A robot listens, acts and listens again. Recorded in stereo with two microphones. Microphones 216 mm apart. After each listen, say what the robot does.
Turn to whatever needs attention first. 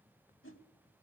Keep listening.
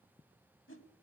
Keep listening.
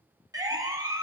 Turn 15° right.
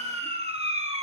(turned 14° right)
Turn 150° right.
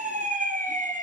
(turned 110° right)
Turn 40° right.
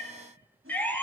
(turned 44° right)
Facing the siren.